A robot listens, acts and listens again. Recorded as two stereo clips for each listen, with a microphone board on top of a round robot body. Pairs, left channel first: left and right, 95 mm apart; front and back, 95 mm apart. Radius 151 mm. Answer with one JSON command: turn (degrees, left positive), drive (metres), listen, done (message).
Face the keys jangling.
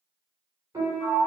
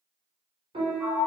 {"listen": true}
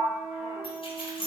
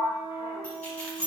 {"turn": 75}
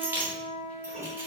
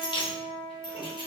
{"turn": -25}
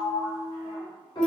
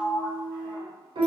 {"listen": true}
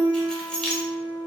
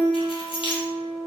{"turn": 10}
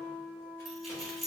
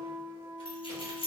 {"done": "Facing the keys jangling."}